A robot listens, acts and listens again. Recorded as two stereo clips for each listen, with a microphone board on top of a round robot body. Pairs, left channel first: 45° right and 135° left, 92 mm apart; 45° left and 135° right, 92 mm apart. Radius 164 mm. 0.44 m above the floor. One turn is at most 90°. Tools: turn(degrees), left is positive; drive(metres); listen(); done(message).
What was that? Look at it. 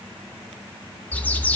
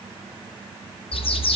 turn(degrees=30)
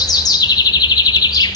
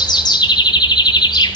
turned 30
done("Facing the bird.")